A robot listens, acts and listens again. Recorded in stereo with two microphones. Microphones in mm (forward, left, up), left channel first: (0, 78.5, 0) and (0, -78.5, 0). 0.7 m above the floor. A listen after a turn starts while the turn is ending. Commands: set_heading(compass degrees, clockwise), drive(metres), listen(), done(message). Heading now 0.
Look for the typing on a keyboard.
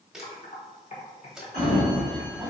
set_heading(315)
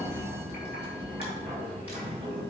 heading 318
listen()
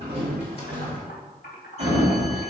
set_heading(228)
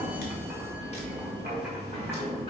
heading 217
set_heading(227)
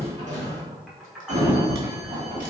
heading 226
done("Found it: typing on a keyboard, straight ahead.")